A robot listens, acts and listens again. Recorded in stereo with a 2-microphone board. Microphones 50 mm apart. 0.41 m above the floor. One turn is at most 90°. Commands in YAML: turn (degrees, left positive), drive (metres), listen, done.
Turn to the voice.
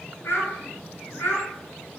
turn: 45
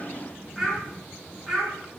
done: "Found it: a child speaking, straight ahead, over 4 m away."